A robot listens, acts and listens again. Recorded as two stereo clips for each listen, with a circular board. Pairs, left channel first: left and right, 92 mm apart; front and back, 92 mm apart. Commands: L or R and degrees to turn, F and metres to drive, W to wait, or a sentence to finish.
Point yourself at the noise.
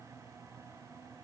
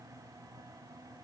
W
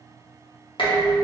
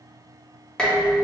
L80
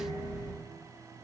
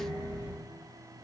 L35
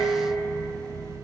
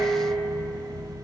L10
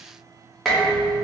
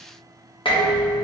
Facing the dishes clattering.